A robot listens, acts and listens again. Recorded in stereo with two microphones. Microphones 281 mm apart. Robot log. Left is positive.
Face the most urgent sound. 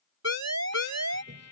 note: The siren: about 70° right or 110° right.
cmd yaw -70
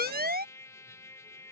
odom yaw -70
note: So it is at 35° right.
cmd yaw -35
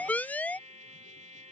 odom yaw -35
end: Facing the siren.